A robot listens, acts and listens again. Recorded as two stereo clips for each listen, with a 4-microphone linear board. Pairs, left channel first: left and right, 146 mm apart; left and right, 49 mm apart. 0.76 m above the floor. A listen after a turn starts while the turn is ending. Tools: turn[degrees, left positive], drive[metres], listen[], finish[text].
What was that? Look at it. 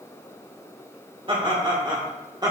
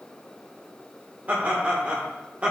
Thought: The laughter: about 25° right or 155° right.
Action: turn[-25]
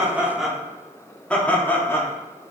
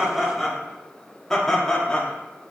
Thought: So it is at 20° left.
Action: turn[20]
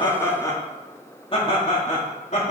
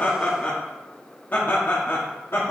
Thought: The laughter is now 55° left.
Action: turn[55]
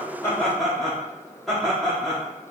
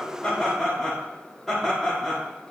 Action: finish[Found it: laughter, straight ahead.]